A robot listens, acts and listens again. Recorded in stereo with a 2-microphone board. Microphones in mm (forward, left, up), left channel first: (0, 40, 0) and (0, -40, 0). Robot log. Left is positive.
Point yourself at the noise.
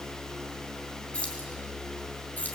note: The keys jangling: about 25° left or 155° left.
cmd yaw +25
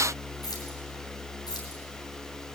cmd idle
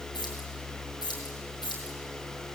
note: So it is at 110° left.
cmd yaw +110
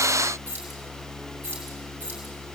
note: The keys jangling is now 25° right.
cmd yaw -25
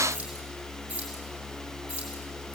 note: The keys jangling is now 15° right.
cmd yaw -15
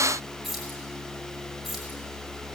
end: Found it: keys jangling, straight ahead.